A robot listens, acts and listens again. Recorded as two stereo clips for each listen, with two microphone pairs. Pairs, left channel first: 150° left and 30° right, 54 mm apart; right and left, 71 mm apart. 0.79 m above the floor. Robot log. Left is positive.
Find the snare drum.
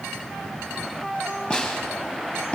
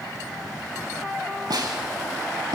note: The snare drum: 80° left.
cmd yaw +80
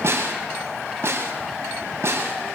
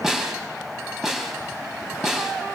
end: Facing the snare drum.